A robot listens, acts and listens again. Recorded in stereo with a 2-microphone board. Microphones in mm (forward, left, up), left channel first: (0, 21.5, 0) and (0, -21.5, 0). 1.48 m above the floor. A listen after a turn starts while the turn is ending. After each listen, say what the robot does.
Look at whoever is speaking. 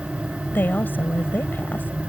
Turn 55° left.
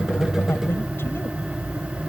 Keep listening.
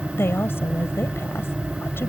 Turn 70° left.
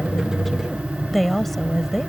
Found it: a woman speaking, straight ahead.